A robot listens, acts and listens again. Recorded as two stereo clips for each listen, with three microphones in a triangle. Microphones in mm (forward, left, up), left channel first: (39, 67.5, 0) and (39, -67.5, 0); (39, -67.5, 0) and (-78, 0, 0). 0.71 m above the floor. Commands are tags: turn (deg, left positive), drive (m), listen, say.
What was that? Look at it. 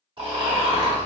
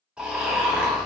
<turn deg="-130"/>
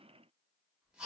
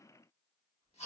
<turn deg="-10"/>
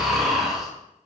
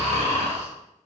<say>Found it: snoring, straight ahead, 1 to 2 m away.</say>